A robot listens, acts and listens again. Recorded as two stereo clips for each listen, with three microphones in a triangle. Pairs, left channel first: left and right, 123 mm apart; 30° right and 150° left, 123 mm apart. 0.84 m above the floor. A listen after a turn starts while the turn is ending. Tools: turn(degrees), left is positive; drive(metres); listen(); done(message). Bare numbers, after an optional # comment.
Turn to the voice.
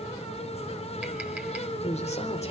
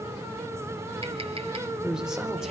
# The man speaking: 65° left.
turn(65)
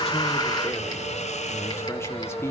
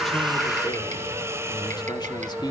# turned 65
# The man speaking is now 20° left.
turn(20)
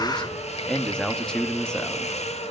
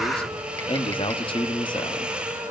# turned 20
done("Found it: a man speaking, straight ahead.")